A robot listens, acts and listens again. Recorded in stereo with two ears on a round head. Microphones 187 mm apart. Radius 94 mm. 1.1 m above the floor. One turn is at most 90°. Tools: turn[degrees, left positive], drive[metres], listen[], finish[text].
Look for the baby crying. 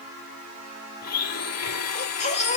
Thought: The baby crying: about 35° left or 145° left.
Action: turn[35]
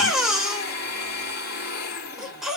Action: finish[Facing the baby crying, 2 to 4 m away.]